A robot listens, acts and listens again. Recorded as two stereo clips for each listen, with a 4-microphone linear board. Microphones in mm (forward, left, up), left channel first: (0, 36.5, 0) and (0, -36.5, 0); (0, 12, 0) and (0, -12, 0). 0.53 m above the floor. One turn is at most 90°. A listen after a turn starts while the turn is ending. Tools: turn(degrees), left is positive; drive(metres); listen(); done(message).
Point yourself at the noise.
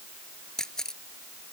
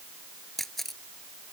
turn(degrees=30)
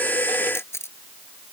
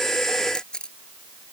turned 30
turn(degrees=90)
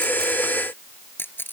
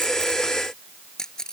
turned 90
turn(degrees=30)
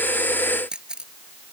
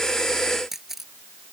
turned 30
turn(degrees=-15)
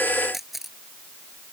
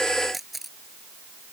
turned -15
done("Facing the camera shutter.")